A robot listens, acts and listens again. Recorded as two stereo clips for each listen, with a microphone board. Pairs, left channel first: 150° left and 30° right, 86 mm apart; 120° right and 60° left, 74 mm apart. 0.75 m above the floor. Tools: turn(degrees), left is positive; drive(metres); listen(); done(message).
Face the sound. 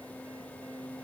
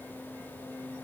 listen()
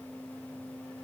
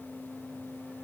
listen()
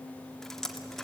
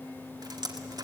turn(degrees=65)
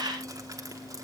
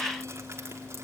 turn(degrees=15)
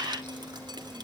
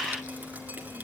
done("Facing the dripping, 1 to 2 m away.")